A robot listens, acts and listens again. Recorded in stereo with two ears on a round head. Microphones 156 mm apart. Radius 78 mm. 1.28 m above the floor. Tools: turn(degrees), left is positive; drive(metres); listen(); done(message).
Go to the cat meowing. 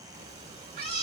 turn(degrees=-35)
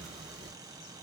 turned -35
drive(metres=1.0)
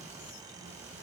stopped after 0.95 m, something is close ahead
turn(degrees=-15)
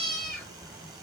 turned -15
done("I am next to the cat meowing.")